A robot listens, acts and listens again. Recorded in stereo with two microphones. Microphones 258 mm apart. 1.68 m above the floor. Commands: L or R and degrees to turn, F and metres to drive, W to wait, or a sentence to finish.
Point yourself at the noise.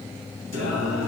R90
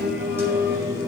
R15
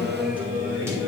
R10
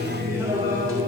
R15
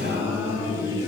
R15
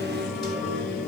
Found it: singing, straight ahead.